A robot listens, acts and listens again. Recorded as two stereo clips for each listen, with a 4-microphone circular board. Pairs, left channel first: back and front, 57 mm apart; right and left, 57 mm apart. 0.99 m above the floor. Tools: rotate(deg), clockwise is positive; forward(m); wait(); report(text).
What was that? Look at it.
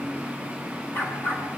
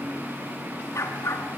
rotate(120)
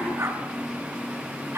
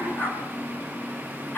rotate(35)
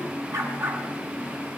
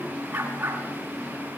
rotate(-25)
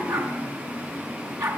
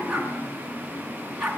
report("Found it: a dog barking, straight ahead.")